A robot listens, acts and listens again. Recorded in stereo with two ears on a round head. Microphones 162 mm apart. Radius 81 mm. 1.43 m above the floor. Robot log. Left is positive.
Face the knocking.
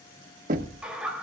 note: The knocking: about 45° right or 135° right.
cmd yaw -45
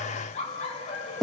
end: Found it: knocking, straight ahead.